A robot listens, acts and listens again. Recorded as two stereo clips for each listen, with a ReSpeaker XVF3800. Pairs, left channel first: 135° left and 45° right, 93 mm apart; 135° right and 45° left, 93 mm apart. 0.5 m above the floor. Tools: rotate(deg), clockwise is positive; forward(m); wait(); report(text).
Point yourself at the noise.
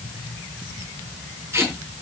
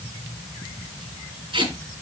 rotate(-20)
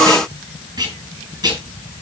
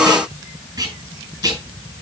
report("Facing the tape being pulled, over 4 m away.")